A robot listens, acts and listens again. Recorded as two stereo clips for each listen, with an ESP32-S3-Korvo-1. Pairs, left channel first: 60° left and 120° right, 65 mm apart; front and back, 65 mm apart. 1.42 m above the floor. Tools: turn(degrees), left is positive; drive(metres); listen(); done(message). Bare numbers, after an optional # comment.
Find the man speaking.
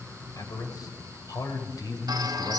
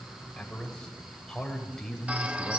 # The man speaking: 85° left.
turn(85)
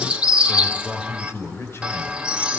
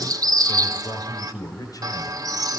# The man speaking is now 10° left.
turn(10)
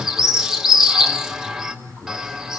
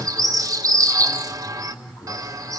# The man speaking is now 10° left.
turn(10)
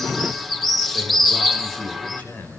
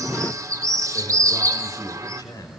done("Found it: a man speaking, straight ahead.")